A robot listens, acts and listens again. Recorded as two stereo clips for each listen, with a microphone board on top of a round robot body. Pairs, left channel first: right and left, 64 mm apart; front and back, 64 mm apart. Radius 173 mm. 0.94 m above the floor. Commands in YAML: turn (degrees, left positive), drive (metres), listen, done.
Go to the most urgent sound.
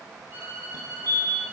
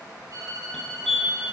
turn: 85
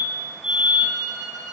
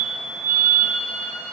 turn: 10
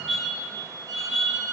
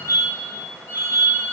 drive: 1.0
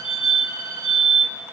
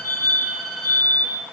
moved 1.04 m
turn: 10
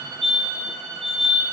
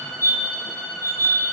drive: 1.0
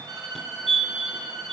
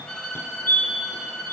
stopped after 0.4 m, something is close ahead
done: "I am next to the fire alarm."